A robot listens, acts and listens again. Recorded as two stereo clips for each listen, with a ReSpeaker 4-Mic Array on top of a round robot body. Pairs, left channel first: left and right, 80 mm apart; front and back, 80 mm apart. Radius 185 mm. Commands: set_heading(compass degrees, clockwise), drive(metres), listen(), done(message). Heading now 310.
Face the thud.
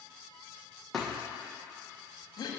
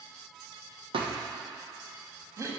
set_heading(130)
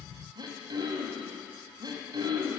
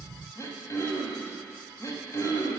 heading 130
done("I heard a thud from this way, but can't make it out now.")